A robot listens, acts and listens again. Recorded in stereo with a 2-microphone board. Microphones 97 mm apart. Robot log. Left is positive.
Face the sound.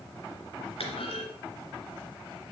cmd yaw +90
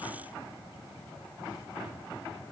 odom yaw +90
end: Facing where the clunk came from. I can't hear it now.